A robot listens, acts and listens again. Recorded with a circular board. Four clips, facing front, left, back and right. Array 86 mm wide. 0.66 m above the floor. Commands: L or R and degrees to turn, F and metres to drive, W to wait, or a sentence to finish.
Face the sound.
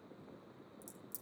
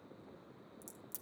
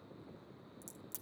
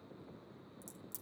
L160
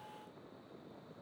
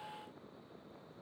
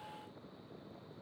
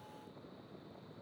Facing where the crack came from. I can't hear it now.